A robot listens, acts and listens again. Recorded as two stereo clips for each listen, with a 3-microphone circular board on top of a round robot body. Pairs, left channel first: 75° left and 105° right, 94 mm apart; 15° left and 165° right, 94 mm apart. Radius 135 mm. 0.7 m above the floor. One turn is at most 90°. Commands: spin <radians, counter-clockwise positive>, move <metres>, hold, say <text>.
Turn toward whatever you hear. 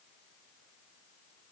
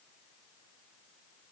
hold
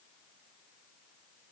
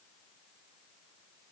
hold
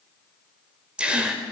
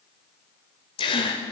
spin -0.44
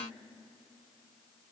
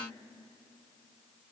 say I heard a gasp from this way, but can't make it out now.